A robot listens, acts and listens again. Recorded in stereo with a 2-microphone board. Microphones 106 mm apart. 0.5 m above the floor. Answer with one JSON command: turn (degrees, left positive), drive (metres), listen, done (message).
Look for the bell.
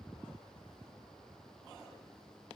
{"listen": true}
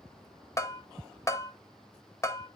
{"turn": 25}
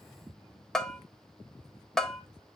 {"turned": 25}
{"done": "Found it: a bell, straight ahead, under 1 m away."}